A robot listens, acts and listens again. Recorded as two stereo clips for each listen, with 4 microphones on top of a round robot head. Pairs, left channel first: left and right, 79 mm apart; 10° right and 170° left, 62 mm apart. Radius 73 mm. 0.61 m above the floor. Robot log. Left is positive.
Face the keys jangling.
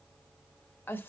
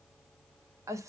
cmd idle
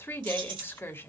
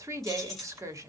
note: The keys jangling: 95° right.
cmd yaw -95
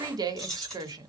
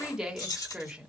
end: Facing the keys jangling, 2 to 4 m away.